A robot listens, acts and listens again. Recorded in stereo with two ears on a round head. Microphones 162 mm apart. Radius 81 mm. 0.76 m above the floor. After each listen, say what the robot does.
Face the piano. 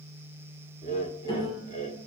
Turn 20° left.
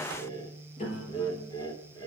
Turn 140° left.
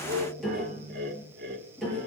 Found it: a piano, straight ahead, over 4 m away.